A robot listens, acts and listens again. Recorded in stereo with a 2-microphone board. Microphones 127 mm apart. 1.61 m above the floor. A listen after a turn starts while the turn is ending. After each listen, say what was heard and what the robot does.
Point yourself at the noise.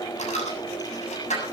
Turn 90° left.
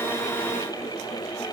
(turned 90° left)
I heard a dropped coin from this way, but can't make it out now.